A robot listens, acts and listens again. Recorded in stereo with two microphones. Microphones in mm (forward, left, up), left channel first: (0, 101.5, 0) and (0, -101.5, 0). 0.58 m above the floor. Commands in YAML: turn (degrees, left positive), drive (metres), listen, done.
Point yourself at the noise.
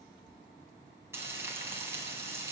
turn: -30
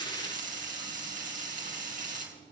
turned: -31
turn: -135
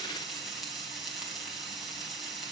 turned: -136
done: "Facing the frying."